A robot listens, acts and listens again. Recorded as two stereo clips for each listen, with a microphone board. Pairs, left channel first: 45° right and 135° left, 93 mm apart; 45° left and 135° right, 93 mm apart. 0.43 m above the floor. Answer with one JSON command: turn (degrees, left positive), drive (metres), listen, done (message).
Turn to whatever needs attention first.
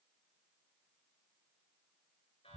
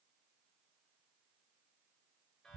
{"listen": true}
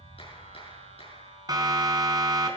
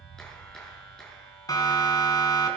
{"turn": 90}
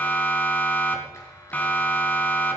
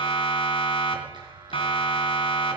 {"turn": 25}
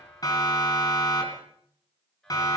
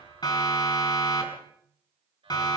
{"done": "Found it: a siren, straight ahead."}